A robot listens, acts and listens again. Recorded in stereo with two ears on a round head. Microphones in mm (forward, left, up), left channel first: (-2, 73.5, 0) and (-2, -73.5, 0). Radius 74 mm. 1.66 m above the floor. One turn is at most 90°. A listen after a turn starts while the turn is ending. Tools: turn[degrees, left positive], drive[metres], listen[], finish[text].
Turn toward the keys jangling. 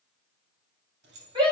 Thought: The keys jangling: about 70° right or 110° right.
Action: turn[-70]
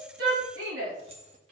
Thought: So it is at 40° right.
Action: turn[-40]
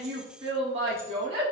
Action: listen[]
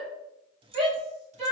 Thought: The keys jangling is now 35° right.
Action: turn[-35]
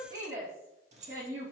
Thought: The keys jangling is now 45° right.
Action: turn[-45]
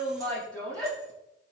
Action: listen[]
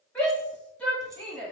Action: listen[]
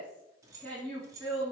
Thought: The keys jangling is now 20° right.
Action: turn[-20]
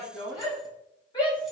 Action: listen[]
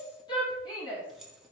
Action: finish[Facing the keys jangling.]